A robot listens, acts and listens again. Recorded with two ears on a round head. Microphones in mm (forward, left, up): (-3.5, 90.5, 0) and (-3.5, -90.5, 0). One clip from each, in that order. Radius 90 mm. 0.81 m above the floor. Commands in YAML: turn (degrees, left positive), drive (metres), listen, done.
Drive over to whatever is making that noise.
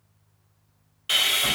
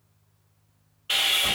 turn: 90
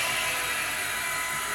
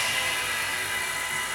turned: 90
drive: 1.0
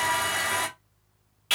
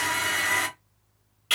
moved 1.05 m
drive: 1.0
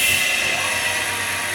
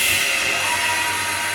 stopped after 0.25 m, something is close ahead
done: "I am next to the sawing."